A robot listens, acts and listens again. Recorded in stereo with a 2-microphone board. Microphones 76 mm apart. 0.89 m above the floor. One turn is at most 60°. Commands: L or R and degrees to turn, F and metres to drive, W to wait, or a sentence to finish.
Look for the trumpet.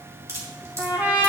R25
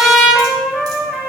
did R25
Facing the trumpet, 1 to 2 m away.